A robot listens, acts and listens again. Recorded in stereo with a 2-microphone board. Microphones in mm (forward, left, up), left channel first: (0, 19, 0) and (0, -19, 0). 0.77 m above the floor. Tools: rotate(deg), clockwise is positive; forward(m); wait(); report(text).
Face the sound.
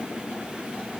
wait()
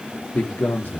rotate(-65)
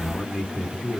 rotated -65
rotate(-20)
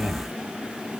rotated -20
report("Facing the man speaking.")